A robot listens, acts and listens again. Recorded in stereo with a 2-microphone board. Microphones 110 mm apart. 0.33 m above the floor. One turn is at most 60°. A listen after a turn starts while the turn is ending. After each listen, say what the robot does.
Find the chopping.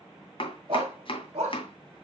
Turn 50° left.
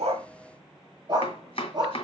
Turn 60° left.
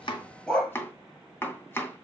Turn 20° left.
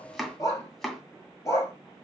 Facing the chopping, 2 to 4 m away.